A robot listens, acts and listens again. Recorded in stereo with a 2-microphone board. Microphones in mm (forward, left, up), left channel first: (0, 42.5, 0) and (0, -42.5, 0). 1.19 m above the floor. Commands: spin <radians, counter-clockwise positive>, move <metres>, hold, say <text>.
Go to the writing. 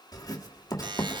spin 0.79
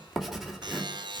move 1.0
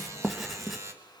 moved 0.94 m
move 1.0
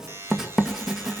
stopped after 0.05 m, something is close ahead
say I am next to the writing.